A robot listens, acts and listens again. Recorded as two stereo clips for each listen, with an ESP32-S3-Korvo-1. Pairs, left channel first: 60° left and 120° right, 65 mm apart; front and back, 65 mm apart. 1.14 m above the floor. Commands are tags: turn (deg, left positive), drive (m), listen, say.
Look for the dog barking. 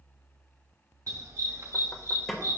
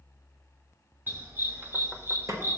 <turn deg="-140"/>
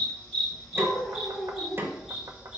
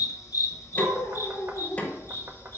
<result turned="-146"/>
<turn deg="-50"/>
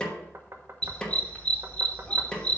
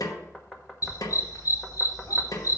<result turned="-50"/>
<turn deg="-10"/>
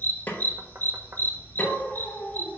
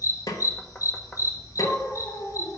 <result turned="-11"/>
<say>Facing the dog barking, 2 to 4 m away.</say>